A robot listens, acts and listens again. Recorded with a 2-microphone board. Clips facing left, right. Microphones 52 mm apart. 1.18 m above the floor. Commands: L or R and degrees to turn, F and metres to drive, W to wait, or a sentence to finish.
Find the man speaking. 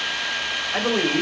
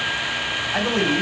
L40
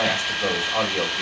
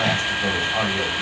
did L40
L100
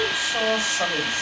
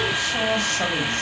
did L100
L20
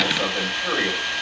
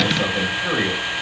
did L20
Found it: a man speaking, straight ahead.